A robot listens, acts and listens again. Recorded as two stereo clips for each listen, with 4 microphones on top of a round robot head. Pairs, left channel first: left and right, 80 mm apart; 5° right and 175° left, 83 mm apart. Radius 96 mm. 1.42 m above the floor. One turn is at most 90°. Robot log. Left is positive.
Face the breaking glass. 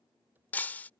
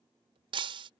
note: The breaking glass: 160° left.
cmd yaw +90
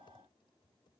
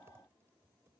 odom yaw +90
note: Nothing new. It was at 70° left.
cmd yaw +70
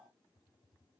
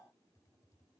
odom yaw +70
end: I heard breaking glass from this way, but can't make it out now.